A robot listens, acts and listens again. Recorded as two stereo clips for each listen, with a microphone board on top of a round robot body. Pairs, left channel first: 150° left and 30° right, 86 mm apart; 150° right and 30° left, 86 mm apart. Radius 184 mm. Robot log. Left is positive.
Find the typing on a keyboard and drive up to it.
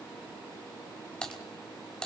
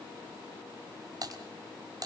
note: The typing on a keyboard: 70° left.
cmd yaw +70
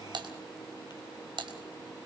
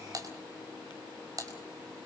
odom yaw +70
note: The typing on a keyboard is now 15° right.
cmd yaw -15
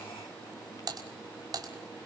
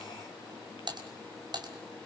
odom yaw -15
cmd fwd 1.0
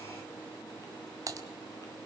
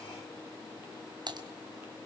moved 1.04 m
note: The typing on a keyboard is now 15° left.
cmd yaw +15
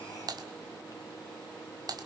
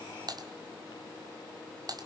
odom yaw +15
cmd fwd 1.0
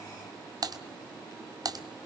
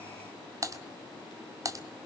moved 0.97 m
cmd fwd 1.0
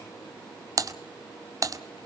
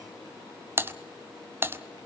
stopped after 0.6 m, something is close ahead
note: The typing on a keyboard is now 20° right.
cmd yaw -20
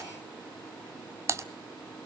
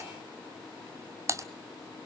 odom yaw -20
end: I am next to the typing on a keyboard.